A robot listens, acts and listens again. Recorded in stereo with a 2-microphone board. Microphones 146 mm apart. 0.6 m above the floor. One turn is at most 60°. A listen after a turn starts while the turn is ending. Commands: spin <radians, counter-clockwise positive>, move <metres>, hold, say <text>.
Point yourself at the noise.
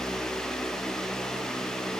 hold
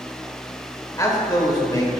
spin 0.52
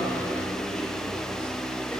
hold
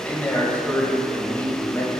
spin 0.26
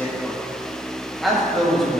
say Found it: a man speaking, straight ahead, 2 to 4 m away.